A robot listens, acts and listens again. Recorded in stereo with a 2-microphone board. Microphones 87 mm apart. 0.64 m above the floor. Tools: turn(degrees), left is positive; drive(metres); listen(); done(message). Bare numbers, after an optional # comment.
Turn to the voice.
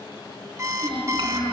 turn(-90)
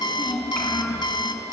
done("Facing the child speaking.")